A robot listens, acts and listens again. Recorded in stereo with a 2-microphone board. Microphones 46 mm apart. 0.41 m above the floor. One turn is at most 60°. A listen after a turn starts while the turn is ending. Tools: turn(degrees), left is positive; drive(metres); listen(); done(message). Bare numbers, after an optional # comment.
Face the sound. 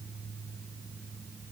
listen()
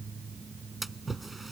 turn(30)
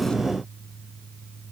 listen()
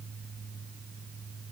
done("I heard a splash, but can't make it out now. It was about 30° right or 150° left.")